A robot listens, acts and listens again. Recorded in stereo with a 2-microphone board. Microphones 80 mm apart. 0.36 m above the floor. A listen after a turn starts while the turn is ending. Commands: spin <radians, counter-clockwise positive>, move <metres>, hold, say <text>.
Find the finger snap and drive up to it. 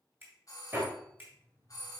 spin -0.44
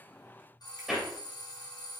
hold
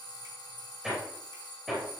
hold
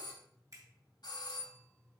spin -2.18
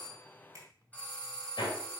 spin -0.87
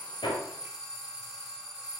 hold
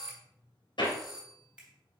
spin -0.26
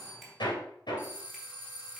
hold
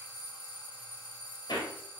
hold
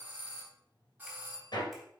say Facing where the finger snap came from. I can't hear it now. I did not reach it.